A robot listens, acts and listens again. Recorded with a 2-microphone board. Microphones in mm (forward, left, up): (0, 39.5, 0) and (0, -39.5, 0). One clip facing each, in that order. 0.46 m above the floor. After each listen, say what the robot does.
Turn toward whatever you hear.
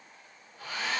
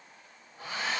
Turn 25° right.
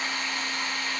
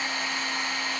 Turn 125° right.
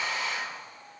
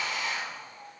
Turn 15° left.
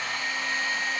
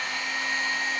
Found it: a hair dryer, straight ahead, 1 to 2 m away.